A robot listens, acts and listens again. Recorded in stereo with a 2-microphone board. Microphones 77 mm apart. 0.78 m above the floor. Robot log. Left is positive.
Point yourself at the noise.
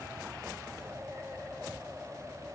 cmd idle
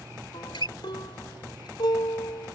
cmd yaw +90
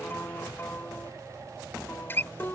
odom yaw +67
note: So it is at 30° left.
cmd yaw +30
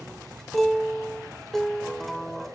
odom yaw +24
end: Facing the guitar.